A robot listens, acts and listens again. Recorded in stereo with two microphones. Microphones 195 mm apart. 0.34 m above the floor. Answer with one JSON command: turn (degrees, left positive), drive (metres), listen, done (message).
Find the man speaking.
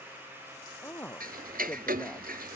{"turn": 30}
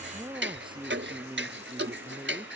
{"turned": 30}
{"turn": -30}
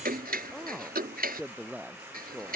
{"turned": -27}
{"done": "Facing the man speaking."}